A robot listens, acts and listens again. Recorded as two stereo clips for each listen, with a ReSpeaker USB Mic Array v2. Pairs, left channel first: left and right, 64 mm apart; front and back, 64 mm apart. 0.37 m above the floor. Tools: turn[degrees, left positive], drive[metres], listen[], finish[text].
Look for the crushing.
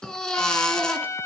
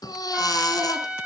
Action: listen[]
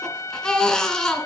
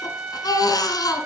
Action: listen[]
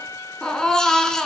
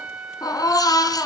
Action: finish[I can't make out crushing to turn to.]